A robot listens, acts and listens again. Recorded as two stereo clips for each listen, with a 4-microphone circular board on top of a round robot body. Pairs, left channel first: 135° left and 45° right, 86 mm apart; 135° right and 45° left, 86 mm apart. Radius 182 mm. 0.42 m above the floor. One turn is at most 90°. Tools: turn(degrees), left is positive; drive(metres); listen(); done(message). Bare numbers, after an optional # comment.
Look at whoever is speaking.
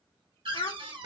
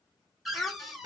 # The child speaking: 145° left.
turn(90)
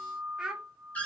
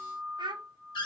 # The child speaking is now 35° left.
turn(35)
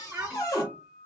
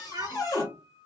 # The child speaking is now 10° left.
turn(10)
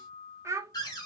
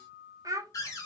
done("Found it: a child speaking, straight ahead, 1 to 2 m away.")